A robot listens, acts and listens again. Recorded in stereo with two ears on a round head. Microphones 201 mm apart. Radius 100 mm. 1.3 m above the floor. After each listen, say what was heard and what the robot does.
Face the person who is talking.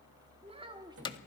The child speaking: about 20° right or 160° right. Turn 20° right.
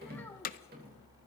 Keep listening.
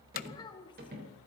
So it is at 20° left. Turn 20° left.
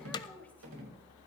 Keep listening.
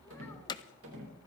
Keep listening.
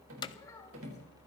Facing where the child speaking came from. I can't hear it now.